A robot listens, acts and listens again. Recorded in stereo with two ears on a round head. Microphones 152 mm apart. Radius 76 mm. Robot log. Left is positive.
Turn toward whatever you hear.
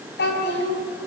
note: The child speaking: about 70° left or 110° left.
cmd yaw +70
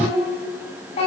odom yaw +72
note: So it is at 35° left.
cmd yaw +35
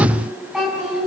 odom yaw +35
end: Facing the child speaking, over 4 m away.